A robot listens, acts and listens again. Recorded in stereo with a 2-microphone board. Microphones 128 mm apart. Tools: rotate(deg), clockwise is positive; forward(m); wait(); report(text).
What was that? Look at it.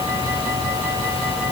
wait()
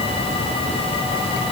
wait()
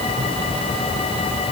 report("I can't make out anything to turn to.")